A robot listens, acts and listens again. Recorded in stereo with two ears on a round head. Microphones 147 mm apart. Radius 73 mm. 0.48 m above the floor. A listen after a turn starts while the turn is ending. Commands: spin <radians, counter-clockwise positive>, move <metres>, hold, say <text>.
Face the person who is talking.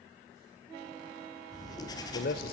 spin 1.05
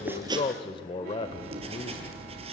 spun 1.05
spin 0.61
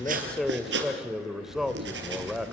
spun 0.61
say Found it: a man speaking, straight ahead, 1 to 2 m away.